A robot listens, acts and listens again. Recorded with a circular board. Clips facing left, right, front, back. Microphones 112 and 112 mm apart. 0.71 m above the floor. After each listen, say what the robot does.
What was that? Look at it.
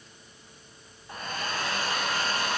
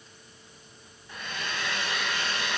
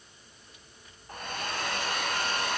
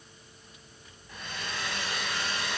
Turn 40° left.
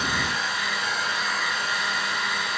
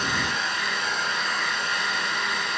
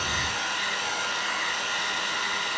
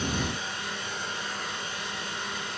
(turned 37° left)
Facing the hair dryer, 2 to 4 m away.